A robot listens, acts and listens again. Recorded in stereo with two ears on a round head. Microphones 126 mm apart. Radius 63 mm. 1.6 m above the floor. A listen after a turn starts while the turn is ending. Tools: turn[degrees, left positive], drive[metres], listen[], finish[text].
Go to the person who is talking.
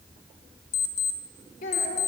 Thought: The child speaking: about 60° left or 120° left.
Action: turn[60]
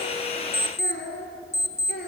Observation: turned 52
Thought: So it is at 65° left.
Action: turn[65]
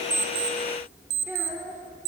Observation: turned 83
Thought: The child speaking is now 15° right.
Action: turn[-15]
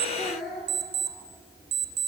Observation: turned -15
Action: drive[1.0]
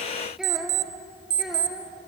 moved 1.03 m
Action: drive[1.0]
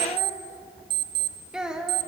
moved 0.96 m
Action: drive[1.0]
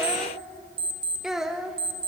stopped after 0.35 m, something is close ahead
Action: finish[Arrived at the child speaking, straight ahead.]